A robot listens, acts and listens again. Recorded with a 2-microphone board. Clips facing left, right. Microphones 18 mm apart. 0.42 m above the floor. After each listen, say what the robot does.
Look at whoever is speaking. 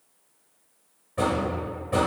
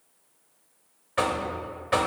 Keep listening.
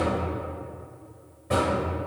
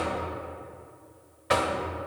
Keep listening.
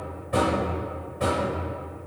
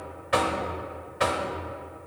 I can't make out anyone speaking, only knocking.